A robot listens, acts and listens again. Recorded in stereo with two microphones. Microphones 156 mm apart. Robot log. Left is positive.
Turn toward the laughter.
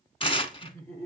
note: The laughter: about 15° left or 165° left.
cmd yaw +15
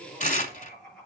cmd yaw +30
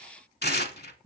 note: So it is at 20° right.
cmd yaw -20
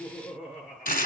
end: Facing the laughter.